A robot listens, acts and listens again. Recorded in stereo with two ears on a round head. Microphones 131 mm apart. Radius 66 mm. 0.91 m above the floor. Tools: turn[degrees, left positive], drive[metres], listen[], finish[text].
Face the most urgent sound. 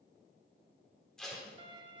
Action: listen[]
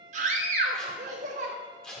Thought: The scream: about 55° right or 125° right.
Action: turn[-55]
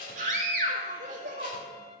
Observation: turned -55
Thought: So it is at 60° right.
Action: turn[-60]
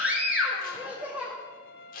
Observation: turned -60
Thought: The scream is now 10° right.
Action: turn[-10]
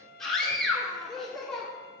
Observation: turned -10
Action: finish[Found it: a scream, straight ahead, 1 to 2 m away.]